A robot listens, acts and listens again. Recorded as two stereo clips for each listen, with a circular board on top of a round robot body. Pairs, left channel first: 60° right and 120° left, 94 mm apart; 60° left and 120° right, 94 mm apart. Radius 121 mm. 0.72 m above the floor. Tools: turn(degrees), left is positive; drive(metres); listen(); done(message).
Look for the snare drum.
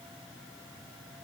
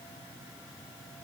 listen()
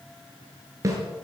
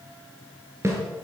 turn(degrees=175)
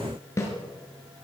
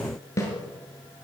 done("Found it: a snare drum, straight ahead, over 4 m away.")